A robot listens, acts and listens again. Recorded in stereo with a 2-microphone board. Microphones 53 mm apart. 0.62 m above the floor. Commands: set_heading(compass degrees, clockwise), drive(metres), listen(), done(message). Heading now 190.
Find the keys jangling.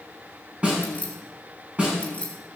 set_heading(170)
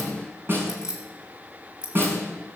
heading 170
set_heading(185)
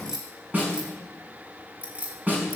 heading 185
set_heading(210)
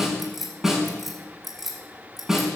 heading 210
done("Found it: keys jangling, straight ahead.")